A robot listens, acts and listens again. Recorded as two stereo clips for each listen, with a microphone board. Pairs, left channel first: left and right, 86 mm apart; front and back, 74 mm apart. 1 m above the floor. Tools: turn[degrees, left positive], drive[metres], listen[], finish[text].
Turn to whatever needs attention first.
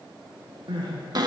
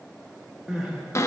Thought: The crying: 100° right.
Action: turn[-100]
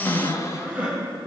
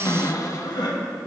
Thought: The crying is now 10° right.
Action: turn[-10]
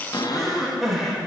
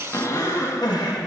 Action: finish[Found it: crying, straight ahead.]